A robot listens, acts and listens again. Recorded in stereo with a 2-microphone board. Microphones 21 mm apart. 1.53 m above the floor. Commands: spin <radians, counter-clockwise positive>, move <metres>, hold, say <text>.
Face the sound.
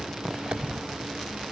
spin -1.31
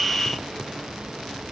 hold
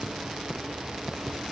say I heard a dropped coin, but can't make it out now. It was about straight ahead or 30° right.